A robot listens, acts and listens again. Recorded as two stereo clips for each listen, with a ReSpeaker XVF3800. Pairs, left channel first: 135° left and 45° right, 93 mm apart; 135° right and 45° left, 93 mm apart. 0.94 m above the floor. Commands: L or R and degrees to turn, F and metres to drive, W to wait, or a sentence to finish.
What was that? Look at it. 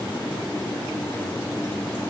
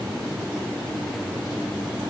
W
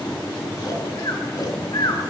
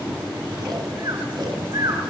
L90
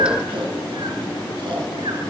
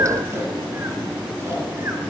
W
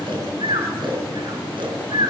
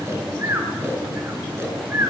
R15
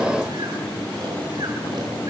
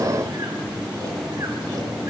W
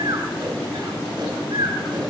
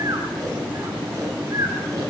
Found it: snoring, straight ahead, 2 to 4 m away.